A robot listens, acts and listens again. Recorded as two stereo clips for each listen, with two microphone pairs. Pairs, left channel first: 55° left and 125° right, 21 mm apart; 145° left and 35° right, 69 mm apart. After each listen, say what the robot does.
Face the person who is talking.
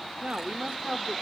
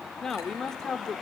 Turn 135° right.
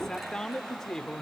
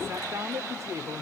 Facing the man speaking.